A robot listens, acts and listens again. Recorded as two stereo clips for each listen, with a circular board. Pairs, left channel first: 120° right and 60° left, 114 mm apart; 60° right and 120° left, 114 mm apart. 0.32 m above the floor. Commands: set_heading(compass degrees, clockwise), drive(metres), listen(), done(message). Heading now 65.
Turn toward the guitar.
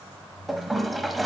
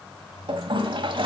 listen()
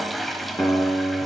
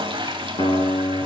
set_heading(135)
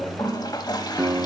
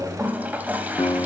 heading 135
set_heading(165)
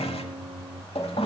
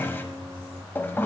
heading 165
set_heading(155)
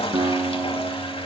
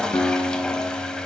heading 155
done("Found it: a guitar, straight ahead, 1 to 2 m away.")